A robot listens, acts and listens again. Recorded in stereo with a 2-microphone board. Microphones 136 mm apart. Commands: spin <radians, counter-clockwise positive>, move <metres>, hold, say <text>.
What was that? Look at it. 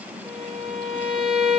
spin 0.52
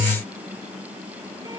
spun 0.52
hold
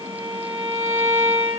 spin -0.44
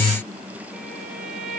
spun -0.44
say Facing the violin.